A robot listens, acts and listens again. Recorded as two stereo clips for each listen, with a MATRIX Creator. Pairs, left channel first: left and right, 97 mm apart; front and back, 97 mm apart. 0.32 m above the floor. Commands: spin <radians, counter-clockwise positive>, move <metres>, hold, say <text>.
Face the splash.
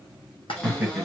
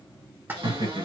spin 1.92
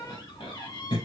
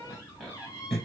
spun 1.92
say Facing where the splash came from. I can't hear it now.